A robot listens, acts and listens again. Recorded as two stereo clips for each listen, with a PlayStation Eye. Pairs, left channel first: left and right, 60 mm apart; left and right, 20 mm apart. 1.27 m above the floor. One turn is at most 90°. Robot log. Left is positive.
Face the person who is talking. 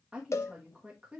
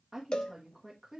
note: The woman speaking: about 15° right or 165° right.
cmd yaw -15
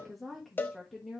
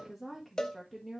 end: Facing the woman speaking, 1 to 2 m away.